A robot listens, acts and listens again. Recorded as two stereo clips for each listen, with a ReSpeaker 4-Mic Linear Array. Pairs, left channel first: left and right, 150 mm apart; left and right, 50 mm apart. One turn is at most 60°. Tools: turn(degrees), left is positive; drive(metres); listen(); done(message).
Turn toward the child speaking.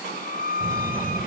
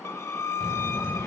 turn(degrees=-15)
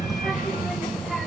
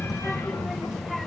done("Facing the child speaking.")